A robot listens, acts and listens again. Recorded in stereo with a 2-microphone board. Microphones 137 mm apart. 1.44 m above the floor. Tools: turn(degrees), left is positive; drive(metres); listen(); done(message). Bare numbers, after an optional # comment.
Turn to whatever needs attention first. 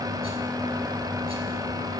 listen()
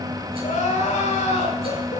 # The crying: about 55° left or 125° left.
turn(55)
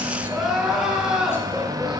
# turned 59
done("Facing the crying.")